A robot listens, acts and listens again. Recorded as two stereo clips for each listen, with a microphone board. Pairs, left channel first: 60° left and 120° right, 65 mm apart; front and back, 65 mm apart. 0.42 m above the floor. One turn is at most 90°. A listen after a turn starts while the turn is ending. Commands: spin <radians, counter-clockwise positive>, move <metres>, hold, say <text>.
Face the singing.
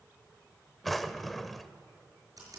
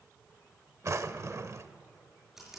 hold
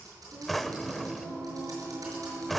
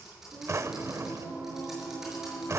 spin -1.57
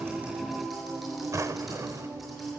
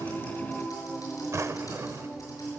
spin -1.48
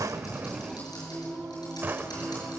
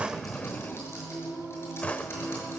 say Facing the singing, over 4 m away.